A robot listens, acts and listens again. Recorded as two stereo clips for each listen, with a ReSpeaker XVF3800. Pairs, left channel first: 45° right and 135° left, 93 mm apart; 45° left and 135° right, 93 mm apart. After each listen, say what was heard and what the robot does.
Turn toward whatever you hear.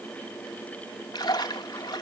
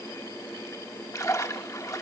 Found it: a splash, straight ahead.